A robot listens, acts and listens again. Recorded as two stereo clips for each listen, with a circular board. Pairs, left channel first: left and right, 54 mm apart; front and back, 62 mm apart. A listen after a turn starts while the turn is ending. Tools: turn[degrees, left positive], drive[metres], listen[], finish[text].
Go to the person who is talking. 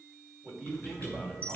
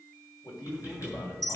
Action: drive[1.0]
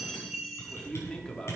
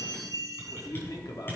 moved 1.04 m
Thought: The man speaking is now 15° left.
Action: turn[15]
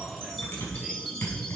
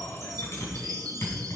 Action: listen[]
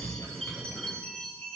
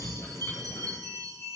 Action: listen[]
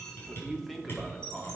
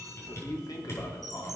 Action: drive[1.0]
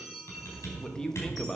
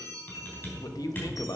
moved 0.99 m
Thought: The man speaking is now 15° left.
Action: turn[15]
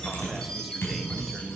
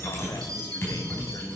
Action: listen[]
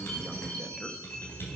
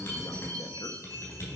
Action: listen[]
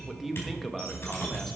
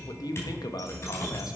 Action: drive[1.0]
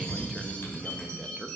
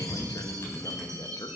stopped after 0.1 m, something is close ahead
Action: finish[Arrived at the man speaking, straight ahead.]